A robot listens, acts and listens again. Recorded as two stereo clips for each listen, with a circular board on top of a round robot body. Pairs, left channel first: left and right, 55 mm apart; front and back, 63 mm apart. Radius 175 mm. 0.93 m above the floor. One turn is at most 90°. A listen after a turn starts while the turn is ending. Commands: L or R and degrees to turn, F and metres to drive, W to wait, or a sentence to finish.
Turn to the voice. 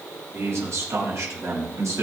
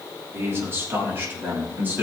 R90
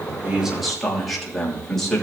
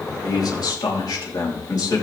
L10
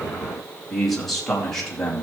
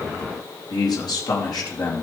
L15
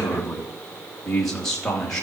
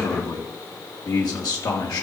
L10
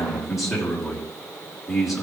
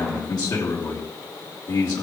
Found it: a man speaking, straight ahead.